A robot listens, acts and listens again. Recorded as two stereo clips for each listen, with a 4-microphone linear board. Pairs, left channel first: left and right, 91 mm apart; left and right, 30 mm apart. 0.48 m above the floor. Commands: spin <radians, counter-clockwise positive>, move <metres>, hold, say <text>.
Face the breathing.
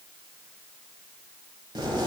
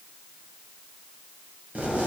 hold
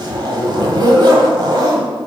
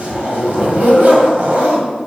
hold
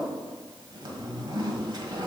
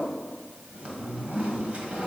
say I can't make out breathing to turn to.